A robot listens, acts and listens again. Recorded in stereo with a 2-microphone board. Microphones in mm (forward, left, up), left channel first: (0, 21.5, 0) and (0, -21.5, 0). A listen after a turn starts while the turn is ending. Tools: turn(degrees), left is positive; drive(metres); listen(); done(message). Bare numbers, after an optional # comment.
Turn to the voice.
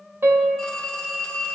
listen()
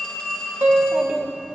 # The child speaking: about 20° right or 160° right.
turn(-20)
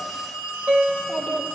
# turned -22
done("Facing the child speaking, 1 to 2 m away.")